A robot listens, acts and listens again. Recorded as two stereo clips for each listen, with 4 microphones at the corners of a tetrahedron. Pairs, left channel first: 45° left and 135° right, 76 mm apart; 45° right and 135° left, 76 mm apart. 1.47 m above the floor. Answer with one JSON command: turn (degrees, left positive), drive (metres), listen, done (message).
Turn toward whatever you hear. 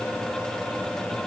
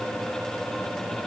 {"listen": true}
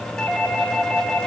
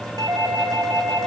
{"turn": 115}
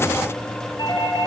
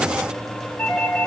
{"turn": 15}
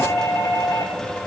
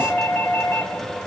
{"done": "Facing the doorbell."}